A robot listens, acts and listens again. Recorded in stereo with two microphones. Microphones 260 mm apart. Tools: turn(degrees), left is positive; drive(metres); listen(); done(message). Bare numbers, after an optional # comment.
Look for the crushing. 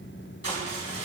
# The crushing: about 65° left or 115° left.
turn(65)
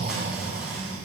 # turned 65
listen()
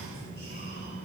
listen()
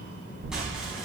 done("I heard crushing, but can't make it out now. It was about straight ahead or 50° left.")